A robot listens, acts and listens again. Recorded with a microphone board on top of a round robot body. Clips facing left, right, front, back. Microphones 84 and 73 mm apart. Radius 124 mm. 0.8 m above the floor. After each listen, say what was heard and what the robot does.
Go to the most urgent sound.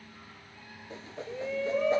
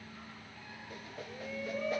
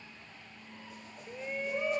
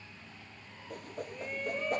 The shout: 80° left. Turn 80° left.
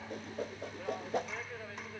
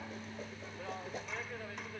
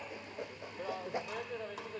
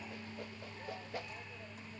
Drive 1.0 m forward.
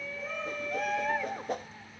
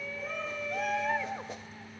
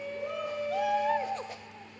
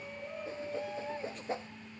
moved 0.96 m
Drive 1.0 m forward.
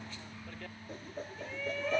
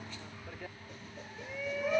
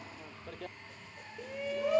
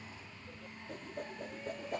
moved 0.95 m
The shout is now 10° right. Turn 10° right.
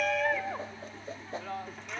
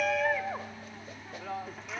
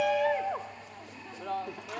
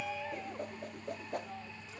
Drive 1.0 m forward.
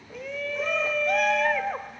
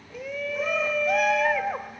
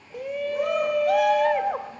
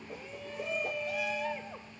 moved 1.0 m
Drive 1.0 m forward.
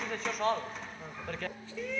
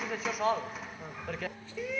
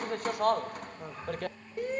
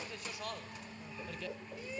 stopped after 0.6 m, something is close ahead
I am next to the shout.